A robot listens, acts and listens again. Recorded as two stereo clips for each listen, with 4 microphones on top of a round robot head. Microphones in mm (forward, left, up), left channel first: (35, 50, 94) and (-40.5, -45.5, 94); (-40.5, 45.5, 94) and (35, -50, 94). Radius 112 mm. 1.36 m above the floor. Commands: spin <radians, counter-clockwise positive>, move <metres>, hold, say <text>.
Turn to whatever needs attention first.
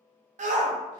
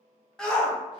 spin -2.62
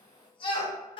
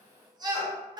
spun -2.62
say Facing the shout.